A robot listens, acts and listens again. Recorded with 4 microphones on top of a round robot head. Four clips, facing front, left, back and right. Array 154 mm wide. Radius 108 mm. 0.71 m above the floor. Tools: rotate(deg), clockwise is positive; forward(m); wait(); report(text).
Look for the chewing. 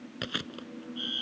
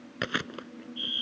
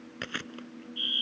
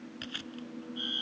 rotate(-80)
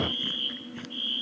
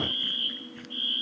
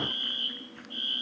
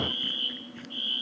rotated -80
wait()
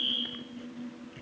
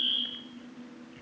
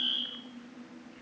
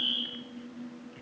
report("Facing the chewing.")